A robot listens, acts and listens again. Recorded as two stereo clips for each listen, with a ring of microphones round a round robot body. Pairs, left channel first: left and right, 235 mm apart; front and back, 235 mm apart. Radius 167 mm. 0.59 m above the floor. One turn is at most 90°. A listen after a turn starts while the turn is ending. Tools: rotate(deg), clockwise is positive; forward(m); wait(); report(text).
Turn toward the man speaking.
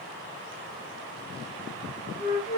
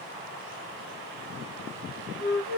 wait()
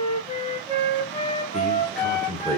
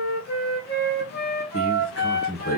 rotate(-10)
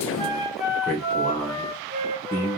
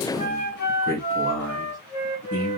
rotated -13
rotate(-15)
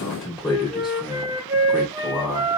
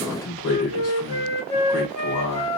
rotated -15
report("Facing the man speaking, 2 to 4 m away.")